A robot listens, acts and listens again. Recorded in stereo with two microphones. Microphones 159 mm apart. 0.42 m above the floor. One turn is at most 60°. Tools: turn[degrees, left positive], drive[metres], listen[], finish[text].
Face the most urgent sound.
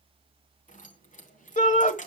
Thought: The shout: about 55° left or 125° left.
Action: turn[55]
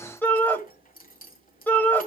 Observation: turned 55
Thought: So it is at 15° left.
Action: turn[15]
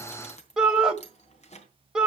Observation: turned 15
Action: finish[Found it: a shout, straight ahead, 1 to 2 m away.]